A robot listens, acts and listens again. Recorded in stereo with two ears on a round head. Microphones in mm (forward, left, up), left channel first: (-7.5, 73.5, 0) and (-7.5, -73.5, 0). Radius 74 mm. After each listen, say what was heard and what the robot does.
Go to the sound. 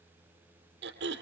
Turn 90° right.
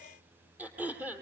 So it is at 10° right. Turn 10° right.
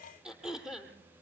Drive 1.0 m forward.
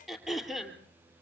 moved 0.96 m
Drive 1.0 m forward.
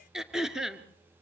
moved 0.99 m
Drive 1.0 m forward.
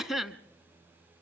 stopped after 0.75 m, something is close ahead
I am next to the throat clearing.